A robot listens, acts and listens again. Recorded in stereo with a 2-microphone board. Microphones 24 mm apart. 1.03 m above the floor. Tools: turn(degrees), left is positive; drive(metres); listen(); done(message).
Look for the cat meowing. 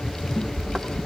turn(degrees=60)
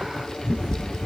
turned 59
turn(degrees=10)
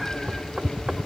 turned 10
listen()
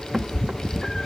turn(degrees=20)
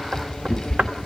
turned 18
turn(degrees=15)
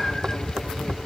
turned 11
turn(degrees=10)
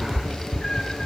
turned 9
turn(degrees=15)
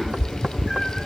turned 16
done("Found it: a cat meowing, straight ahead, 2 to 4 m away.")